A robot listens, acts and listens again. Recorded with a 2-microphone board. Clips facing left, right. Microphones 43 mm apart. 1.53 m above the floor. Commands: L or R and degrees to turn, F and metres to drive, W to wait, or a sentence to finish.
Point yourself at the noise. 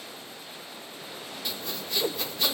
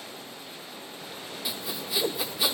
R30
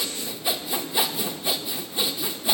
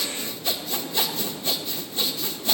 L15
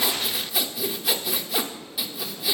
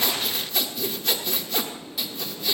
Facing the sawing, 1 to 2 m away.